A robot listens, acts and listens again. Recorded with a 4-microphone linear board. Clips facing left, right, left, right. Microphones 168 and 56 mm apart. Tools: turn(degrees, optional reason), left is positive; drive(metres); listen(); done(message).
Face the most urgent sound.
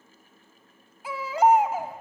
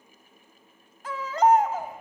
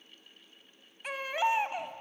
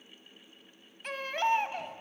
turn(degrees=30)
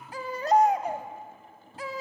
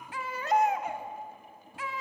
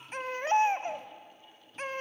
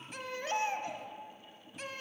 turn(degrees=140, reason="So it is at 140° left.")
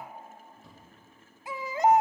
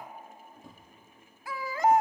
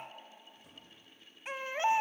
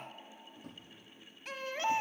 turn(degrees=20, reason="The baby crying is now 20° left.")
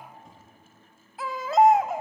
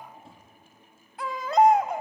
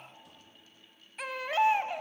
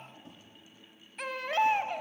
done("Facing the baby crying.")